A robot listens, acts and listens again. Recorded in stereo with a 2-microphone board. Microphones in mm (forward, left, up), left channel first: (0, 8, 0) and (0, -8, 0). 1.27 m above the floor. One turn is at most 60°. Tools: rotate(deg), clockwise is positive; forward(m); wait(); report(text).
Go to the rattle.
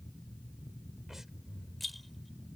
rotate(-30)
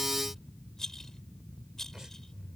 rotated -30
rotate(-60)
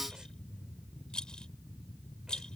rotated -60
rotate(-60)
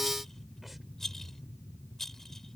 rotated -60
rotate(-25)
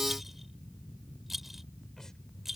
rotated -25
rotate(20)
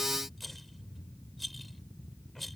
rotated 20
forward(1.0)
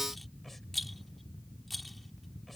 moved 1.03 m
forward(1.0)
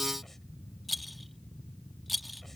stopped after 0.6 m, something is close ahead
report("I am next to the rattle.")